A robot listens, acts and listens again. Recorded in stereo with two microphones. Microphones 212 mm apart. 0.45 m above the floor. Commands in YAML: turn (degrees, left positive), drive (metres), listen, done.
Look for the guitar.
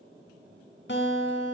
turn: 75
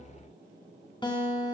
turn: 25
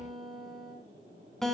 done: "Found it: a guitar, straight ahead, over 4 m away."